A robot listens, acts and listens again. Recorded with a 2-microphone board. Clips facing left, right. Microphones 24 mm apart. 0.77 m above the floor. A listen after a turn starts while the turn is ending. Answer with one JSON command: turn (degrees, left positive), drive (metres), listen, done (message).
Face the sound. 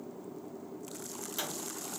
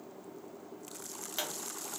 {"turn": -30}
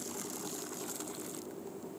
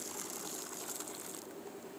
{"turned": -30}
{"listen": true}
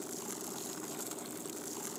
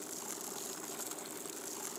{"done": "I heard a pop, but can't make it out now. It was about straight ahead or 120° right."}